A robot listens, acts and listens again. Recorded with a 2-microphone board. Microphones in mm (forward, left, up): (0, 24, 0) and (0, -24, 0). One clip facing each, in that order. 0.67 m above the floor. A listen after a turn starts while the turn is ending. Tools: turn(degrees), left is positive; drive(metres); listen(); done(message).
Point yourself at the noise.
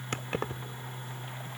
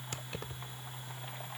turn(degrees=55)
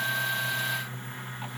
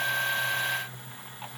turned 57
listen()
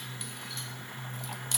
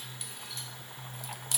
listen()
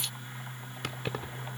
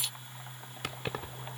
done("Facing the keys jangling.")